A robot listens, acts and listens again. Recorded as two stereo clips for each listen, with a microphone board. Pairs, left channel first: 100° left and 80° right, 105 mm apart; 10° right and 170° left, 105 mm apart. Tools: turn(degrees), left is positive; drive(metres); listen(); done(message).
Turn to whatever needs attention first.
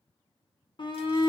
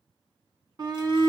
turn(degrees=130)
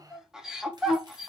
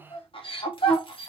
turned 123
done("Facing the shout, 1 to 2 m away.")